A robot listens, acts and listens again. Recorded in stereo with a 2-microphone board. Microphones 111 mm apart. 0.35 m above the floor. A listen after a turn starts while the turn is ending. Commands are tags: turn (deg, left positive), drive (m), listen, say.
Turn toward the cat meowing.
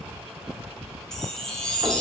<listen/>
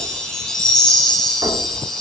<listen/>
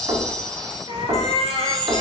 <turn deg="65"/>
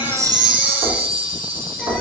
<listen/>
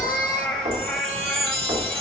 <say>Facing the cat meowing.</say>